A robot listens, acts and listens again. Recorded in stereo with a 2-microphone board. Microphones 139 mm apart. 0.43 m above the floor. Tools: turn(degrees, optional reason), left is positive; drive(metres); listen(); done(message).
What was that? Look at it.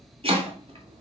turn(degrees=-45, reason="The chopping: about 45° right or 135° right.")
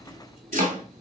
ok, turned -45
turn(degrees=-90, reason="So it is at 90° right.")
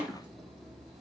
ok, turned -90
listen()
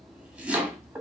turn(degrees=-10, reason="The chopping is now 10° right.")
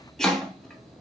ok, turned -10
done("Facing the chopping.")